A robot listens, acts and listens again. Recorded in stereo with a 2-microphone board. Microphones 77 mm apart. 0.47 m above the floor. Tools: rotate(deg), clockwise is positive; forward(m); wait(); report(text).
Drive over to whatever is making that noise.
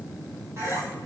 rotate(40)
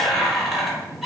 forward(1.0)
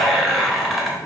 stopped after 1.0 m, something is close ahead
report("Arrived at the squeak, straight ahead.")